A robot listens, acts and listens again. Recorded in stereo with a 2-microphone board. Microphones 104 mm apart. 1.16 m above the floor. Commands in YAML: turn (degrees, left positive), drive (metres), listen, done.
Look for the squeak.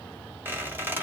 turn: -20
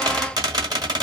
turn: -140
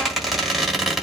done: "Facing the squeak, 1 to 2 m away."